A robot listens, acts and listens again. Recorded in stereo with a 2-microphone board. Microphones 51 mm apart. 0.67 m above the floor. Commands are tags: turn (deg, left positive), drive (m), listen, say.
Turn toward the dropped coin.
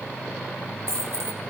<turn deg="-70"/>
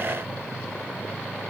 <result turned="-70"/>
<listen/>
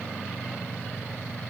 <say>I heard a dropped coin, but can't make it out now. It was about straight ahead or 40° right.</say>